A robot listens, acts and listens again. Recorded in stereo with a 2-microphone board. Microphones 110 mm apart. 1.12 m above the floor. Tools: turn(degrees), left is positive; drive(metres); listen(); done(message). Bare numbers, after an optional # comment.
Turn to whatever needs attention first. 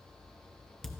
listen()
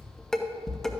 listen()
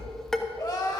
# The crying: about 35° left or 145° left.
turn(35)
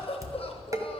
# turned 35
# So it is at 105° left.
turn(105)
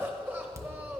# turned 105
# The crying is now 20° right.
turn(-20)
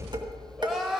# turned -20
done("Facing the crying, 1 to 2 m away.")